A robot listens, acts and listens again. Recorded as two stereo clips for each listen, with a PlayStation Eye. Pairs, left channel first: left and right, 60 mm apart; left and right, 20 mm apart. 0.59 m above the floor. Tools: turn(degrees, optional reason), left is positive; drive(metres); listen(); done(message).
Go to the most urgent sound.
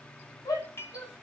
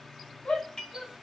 turn(degrees=90)
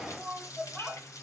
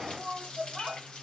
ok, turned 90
drive(metres=1.0)
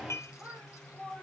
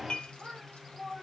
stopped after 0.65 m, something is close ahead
turn(degrees=-15, reason="The shout is now 15° right.")
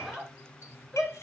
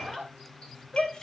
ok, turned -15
done("Something is in my way. I am facing the shout but have not reached it.")